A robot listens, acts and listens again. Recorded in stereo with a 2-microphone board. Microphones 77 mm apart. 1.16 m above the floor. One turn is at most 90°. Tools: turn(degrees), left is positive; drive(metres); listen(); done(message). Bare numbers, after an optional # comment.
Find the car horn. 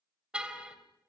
turn(-30)
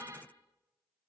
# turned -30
# So it is at 135° right.
turn(-90)
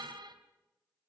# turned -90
# The car horn is now 80° right.
turn(-80)
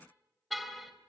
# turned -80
done("Facing the car horn.")